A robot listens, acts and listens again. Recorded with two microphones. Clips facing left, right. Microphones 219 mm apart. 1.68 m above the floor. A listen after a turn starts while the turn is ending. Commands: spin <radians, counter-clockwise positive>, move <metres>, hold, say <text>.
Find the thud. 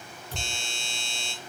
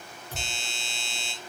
spin -0.52
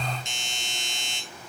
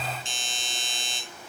hold
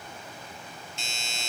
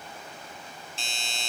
say I heard a thud, but can't make it out now. It was about 20° left or 140° right.